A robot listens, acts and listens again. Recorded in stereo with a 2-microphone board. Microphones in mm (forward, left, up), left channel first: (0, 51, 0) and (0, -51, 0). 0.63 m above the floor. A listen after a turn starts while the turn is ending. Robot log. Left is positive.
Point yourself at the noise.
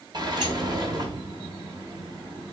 note: The sliding door: about 45° right or 135° right.
cmd yaw -45
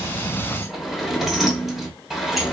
end: Facing the sliding door, 1 to 2 m away.